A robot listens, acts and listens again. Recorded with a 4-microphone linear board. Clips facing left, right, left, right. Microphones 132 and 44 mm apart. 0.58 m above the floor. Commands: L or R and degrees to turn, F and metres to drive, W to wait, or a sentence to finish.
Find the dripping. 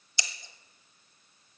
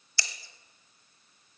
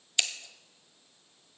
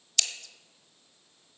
W
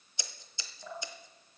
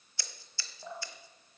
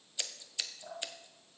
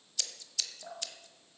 R20
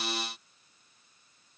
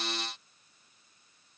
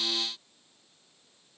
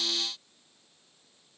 W
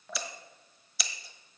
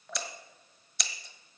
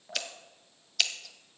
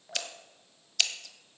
Found it: dripping, straight ahead.